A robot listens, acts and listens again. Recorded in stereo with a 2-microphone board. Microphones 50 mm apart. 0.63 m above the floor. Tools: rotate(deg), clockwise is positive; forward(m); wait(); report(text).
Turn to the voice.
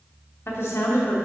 rotate(-60)
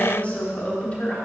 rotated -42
rotate(-35)
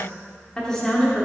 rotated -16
rotate(-15)
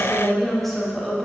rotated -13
report("Facing the woman speaking.")